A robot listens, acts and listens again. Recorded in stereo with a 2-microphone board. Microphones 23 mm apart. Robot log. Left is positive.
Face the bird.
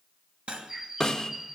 note: The bird: about 20° right or 160° right.
cmd yaw -20
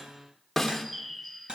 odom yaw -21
end: Found it: a bird, straight ahead, 1 to 2 m away.